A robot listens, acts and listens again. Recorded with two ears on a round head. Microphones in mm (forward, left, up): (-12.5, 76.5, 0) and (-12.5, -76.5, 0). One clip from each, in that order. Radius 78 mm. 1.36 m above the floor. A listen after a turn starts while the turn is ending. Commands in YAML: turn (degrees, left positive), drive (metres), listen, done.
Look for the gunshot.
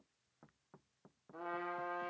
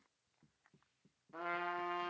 listen: true
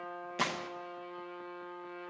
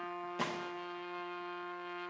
turn: 30
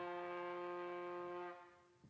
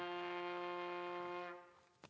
listen: true
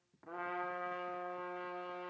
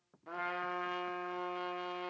done: "I heard a gunshot, but can't make it out now. It was about straight ahead or 120° left."